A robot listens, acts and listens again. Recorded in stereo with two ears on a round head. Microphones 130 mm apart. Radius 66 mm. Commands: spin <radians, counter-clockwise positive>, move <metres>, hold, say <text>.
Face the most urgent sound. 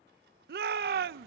spin -1.57
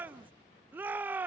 spin -0.17
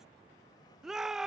say Facing the shout.